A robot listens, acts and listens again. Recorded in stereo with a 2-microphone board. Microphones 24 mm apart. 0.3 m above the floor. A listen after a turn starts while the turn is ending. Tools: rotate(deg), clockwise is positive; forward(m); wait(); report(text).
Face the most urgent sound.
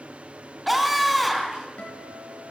rotate(-30)
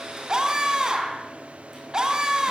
rotate(30)
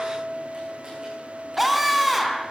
report("Facing the scream, 2 to 4 m away.")